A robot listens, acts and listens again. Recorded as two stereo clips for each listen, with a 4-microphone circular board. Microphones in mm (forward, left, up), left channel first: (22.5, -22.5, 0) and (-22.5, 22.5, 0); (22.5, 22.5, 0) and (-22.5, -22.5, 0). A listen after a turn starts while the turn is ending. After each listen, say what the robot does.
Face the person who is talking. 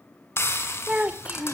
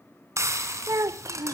Turn 160° right.
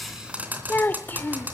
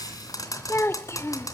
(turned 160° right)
Turn 10° left.
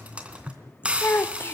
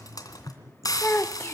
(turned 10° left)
Found it: a child speaking, straight ahead.